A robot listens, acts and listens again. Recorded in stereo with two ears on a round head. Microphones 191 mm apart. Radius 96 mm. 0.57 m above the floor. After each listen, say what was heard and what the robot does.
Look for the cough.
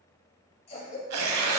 The cough: about 30° left or 150° left. Turn 30° left.
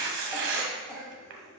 Found it: a cough, straight ahead.